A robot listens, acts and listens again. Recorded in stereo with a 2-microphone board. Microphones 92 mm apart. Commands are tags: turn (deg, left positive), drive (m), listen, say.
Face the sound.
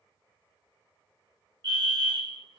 <turn deg="-55"/>
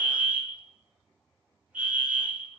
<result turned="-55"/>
<turn deg="-20"/>
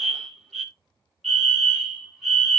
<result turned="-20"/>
<say>Facing the fire alarm, 2 to 4 m away.</say>